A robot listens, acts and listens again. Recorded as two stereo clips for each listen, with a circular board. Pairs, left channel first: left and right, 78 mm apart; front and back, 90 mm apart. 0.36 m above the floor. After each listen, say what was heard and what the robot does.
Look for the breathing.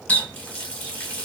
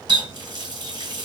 Keep listening.
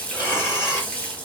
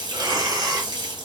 The breathing: 160° right. Turn 160° right.
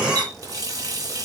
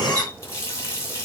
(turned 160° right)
Keep listening.
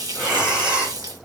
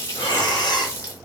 The breathing is now 15° right. Turn 15° right.
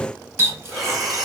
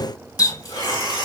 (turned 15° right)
Facing the breathing, 1 to 2 m away.